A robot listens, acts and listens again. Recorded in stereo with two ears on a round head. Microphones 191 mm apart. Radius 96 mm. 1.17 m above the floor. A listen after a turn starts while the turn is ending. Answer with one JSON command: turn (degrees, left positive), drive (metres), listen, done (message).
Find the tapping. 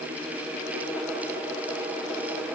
{"listen": true}
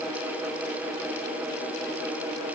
{"listen": true}
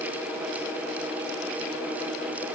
{"done": "I can't make out tapping to turn to."}